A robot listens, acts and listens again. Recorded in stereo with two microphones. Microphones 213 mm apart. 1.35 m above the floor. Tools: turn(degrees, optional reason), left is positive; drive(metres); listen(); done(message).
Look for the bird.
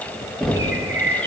turn(degrees=-65, reason="The bird: about 65° right or 115° right.")
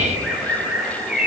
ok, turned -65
done("Found it: a bird, straight ahead, 1 to 2 m away.")